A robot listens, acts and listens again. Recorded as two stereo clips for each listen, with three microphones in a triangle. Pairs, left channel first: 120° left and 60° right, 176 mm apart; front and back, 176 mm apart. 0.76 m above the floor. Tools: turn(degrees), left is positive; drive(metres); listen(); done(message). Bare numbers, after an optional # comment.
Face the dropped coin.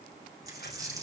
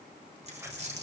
# The dropped coin: 130° right.
turn(-130)
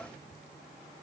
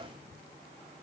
done("I heard a dropped coin from this way, but can't make it out now.")